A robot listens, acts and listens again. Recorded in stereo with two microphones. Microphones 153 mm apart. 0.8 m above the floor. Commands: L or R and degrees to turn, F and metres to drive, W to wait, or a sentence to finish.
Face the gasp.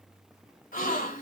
L75
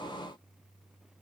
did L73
W
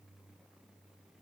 I heard a gasp, but can't make it out now. It was about straight ahead or 35° left.